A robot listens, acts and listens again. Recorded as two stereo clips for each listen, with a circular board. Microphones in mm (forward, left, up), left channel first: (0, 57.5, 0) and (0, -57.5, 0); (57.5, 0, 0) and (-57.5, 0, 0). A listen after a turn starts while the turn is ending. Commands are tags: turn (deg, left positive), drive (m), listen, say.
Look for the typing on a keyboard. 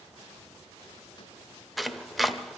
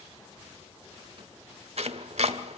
<listen/>
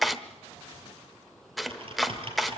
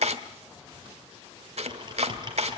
<turn deg="-130"/>
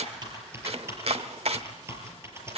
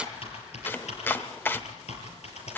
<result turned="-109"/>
<turn deg="-20"/>
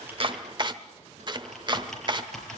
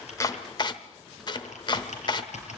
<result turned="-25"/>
<say>Found it: typing on a keyboard, straight ahead.</say>